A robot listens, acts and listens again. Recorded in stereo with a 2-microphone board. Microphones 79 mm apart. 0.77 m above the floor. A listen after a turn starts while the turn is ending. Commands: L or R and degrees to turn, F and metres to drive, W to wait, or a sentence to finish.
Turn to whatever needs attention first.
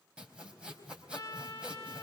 W
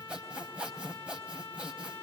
W
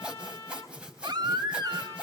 R60
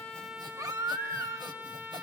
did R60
R50
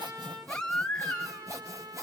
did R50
L10
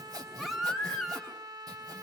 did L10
Found it: a baby crying, straight ahead, 1 to 2 m away.